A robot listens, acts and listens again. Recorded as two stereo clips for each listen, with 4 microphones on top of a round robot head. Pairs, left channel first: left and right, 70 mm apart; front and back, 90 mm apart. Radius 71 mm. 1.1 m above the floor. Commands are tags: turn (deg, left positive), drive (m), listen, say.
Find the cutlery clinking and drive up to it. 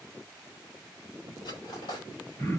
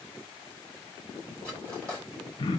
<turn deg="75"/>
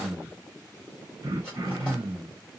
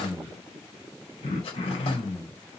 <listen/>
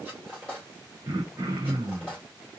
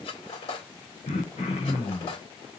<turn deg="10"/>
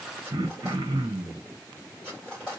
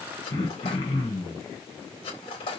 <drive m="1.0"/>
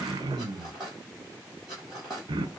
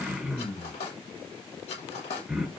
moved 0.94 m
<drive m="1.0"/>
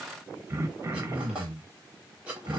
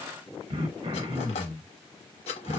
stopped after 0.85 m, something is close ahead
<turn deg="-10"/>
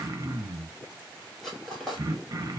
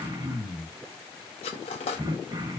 <say>Arrived at the cutlery clinking, straight ahead.</say>